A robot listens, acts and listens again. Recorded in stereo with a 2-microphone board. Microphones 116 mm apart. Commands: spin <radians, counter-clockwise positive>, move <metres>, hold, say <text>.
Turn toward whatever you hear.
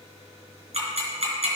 spin -1.13
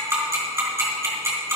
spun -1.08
spin -0.44
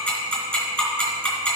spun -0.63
spin 0.26
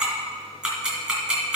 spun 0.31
say Found it: ticking, straight ahead, 2 to 4 m away.